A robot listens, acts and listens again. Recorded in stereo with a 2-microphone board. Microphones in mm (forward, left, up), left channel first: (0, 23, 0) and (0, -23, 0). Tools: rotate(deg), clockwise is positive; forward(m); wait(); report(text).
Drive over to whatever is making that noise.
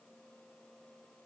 wait()
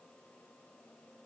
wait()
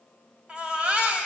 rotate(25)
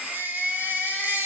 rotate(130)
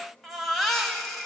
forward(1.0)
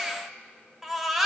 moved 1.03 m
forward(1.0)
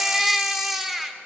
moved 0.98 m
rotate(10)
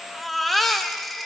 forward(1.0)
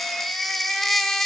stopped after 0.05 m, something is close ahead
report("I am next to the baby crying.")